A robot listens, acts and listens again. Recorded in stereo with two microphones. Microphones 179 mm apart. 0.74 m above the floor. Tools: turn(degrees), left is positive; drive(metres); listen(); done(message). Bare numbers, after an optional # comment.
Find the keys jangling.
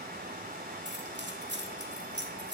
turn(-90)
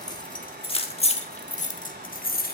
# So it is at 55° left.
turn(55)
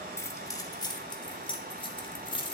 # The keys jangling is now 25° left.
turn(25)
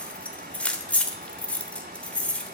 done("Found it: keys jangling, straight ahead.")